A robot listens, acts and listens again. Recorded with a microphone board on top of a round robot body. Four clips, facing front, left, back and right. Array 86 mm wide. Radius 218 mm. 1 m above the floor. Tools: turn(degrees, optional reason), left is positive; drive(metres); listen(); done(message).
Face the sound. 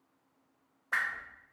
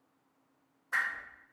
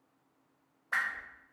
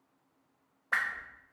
turn(degrees=-85, reason="The whoosh: 85° right.")
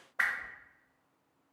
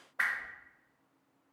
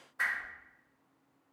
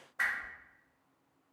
turn(degrees=20, reason="The whoosh is now 20° left.")
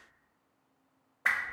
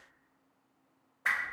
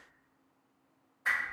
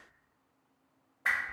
done("Facing the whoosh, under 1 m away.")